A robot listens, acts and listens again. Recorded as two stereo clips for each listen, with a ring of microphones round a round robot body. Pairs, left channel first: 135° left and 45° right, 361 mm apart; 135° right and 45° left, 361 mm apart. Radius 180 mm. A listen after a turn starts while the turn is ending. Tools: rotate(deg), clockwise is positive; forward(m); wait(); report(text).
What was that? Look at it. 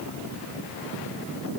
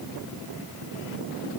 wait()
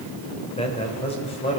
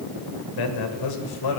rotate(150)
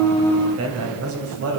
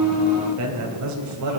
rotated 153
report("Found it: a man speaking, straight ahead, 2 to 4 m away.")